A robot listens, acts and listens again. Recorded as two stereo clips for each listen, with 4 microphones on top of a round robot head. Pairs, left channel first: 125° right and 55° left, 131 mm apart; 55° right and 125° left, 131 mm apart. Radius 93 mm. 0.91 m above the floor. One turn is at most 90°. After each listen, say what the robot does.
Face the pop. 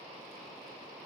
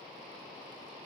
Keep listening.
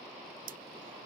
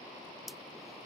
Turn 40° left.
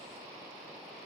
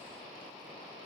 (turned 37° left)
I heard a pop from this way, but can't make it out now.